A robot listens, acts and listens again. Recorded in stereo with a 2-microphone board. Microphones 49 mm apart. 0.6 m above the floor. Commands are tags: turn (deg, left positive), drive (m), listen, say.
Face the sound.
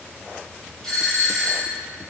<turn deg="30"/>
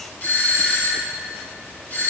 <turn deg="140"/>
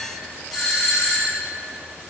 <say>Facing the doorbell, 2 to 4 m away.</say>